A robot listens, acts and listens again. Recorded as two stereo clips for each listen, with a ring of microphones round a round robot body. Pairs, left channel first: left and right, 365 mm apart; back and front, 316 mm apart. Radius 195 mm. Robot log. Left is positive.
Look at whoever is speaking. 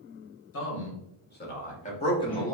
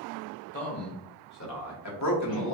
note: The man speaking: 170° left.
cmd yaw +170
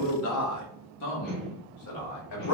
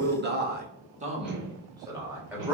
note: The man speaking is now 85° left.
cmd yaw +85
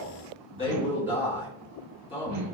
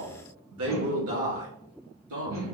note: The man speaking is now 15° left.
cmd yaw +15
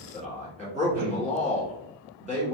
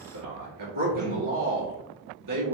end: Facing the man speaking, 2 to 4 m away.